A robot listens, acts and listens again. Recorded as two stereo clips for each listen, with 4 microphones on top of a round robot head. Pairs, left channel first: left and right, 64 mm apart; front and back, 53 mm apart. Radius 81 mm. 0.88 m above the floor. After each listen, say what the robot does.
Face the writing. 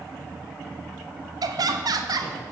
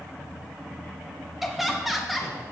Keep listening.
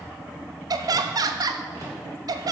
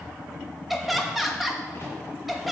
Keep listening.
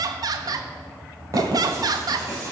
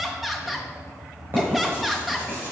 Turn 125° right.
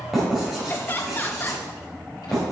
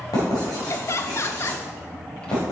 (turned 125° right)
Facing the writing, 2 to 4 m away.